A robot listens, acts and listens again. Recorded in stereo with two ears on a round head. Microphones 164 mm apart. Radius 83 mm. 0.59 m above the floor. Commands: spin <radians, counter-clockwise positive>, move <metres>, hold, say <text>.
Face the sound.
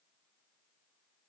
hold
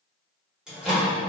spin -0.52
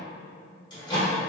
spin 0.44
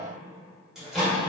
say Found it: a microwave, straight ahead.